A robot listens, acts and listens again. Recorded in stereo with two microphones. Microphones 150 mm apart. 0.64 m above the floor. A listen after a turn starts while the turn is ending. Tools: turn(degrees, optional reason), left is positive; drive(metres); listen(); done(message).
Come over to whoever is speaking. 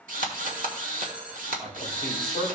turn(degrees=-60, reason="The man speaking: about 60° right or 120° right.")
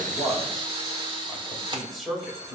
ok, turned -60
drive(metres=1.0)
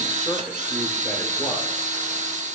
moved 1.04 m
listen()
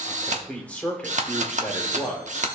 turn(degrees=10, reason="The man speaking is now 10° left.")
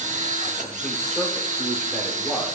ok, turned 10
listen()
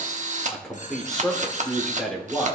drive(metres=1.0)
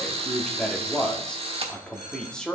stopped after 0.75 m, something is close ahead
turn(degrees=10, reason="The man speaking is now 10° left.")
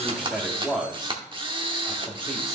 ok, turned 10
done("I am next to the man speaking.")